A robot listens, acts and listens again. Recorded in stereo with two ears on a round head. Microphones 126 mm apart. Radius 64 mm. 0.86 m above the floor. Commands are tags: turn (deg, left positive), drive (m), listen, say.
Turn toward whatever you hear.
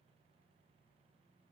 <listen/>
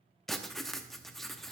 <turn deg="30"/>
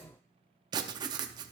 <turn deg="-30"/>
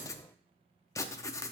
<turn deg="20"/>
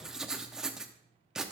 <say>Found it: writing, straight ahead, under 1 m away.</say>